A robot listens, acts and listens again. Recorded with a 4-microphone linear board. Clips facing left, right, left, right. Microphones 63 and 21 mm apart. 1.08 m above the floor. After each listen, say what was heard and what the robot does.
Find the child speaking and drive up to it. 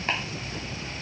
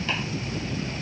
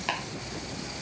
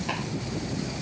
Keep listening.
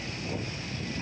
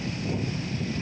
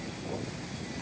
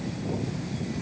Keep listening.
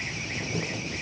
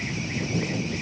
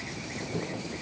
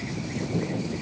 I can't make out a child speaking to turn to.